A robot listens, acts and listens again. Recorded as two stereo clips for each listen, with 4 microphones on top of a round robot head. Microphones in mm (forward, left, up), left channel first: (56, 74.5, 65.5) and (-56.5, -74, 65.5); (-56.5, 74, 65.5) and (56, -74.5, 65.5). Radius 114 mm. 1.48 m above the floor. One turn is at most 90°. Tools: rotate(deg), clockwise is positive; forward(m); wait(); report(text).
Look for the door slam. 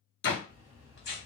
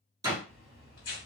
rotate(-20)
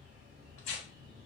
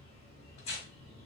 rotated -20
report("I heard a door slam from this way, but can't make it out now.")